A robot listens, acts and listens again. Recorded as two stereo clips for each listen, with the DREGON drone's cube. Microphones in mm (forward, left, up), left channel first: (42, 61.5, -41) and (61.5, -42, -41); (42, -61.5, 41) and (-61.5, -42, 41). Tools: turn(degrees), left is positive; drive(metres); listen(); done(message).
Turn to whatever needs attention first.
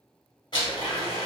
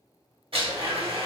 listen()
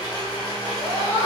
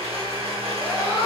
turn(degrees=-70)
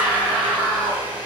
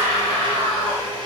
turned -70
done("Facing the scream.")